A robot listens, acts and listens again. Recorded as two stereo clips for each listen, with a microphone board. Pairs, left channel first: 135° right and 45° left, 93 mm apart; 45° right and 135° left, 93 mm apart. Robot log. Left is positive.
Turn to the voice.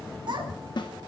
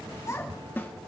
note: The child speaking: 10° left.
cmd yaw +10
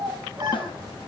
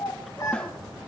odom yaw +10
end: Facing the child speaking.